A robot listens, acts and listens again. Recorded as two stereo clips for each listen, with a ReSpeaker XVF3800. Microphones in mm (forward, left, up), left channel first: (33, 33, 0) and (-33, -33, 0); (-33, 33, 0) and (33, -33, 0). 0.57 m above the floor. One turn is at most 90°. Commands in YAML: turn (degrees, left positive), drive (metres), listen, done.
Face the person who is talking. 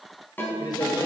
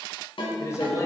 turn: 80
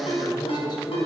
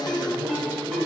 turn: 20
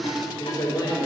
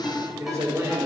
turn: 10
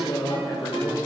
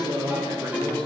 done: "Found it: a man speaking, straight ahead, 2 to 4 m away."